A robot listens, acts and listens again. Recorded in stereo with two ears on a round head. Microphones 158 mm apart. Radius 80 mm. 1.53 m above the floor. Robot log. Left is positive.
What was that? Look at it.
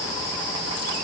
cmd idle
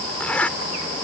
cmd yaw +30
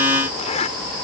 note: So it is at 140° left.
cmd yaw +140
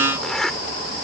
end: Found it: a zipper, straight ahead.